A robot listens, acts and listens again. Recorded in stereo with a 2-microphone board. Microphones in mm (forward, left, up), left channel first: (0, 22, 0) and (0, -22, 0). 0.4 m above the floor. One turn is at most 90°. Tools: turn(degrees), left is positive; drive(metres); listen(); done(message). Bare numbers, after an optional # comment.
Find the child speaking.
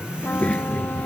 # The child speaking: about 30° left or 150° left.
turn(30)
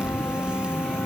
listen()
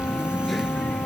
listen()
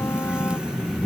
done("Found it: a child speaking, straight ahead.")